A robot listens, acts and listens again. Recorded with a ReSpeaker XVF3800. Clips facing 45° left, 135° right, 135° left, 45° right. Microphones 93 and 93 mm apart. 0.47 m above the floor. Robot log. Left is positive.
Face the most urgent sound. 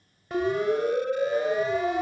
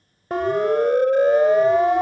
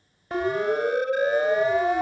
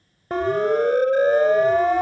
note: The siren: 90° right.
cmd yaw -90
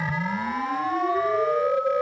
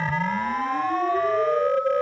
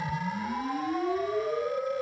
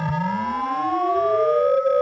note: The siren is now 35° right.
cmd yaw -35
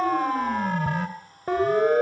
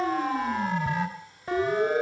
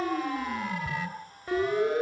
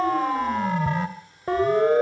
end: Found it: a siren, straight ahead.